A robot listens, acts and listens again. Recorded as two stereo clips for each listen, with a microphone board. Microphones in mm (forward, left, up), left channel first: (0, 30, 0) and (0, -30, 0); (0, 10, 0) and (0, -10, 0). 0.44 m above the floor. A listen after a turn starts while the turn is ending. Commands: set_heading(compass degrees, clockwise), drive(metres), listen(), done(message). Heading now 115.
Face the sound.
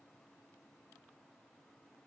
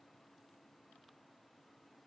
listen()
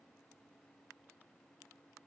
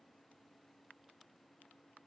listen()
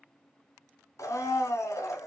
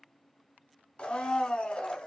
set_heading(55)
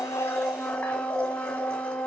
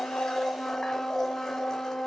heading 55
set_heading(30)
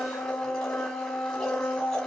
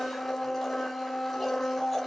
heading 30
set_heading(15)
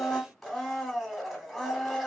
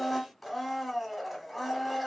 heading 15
done("Found it: a blender, straight ahead, under 1 m away.")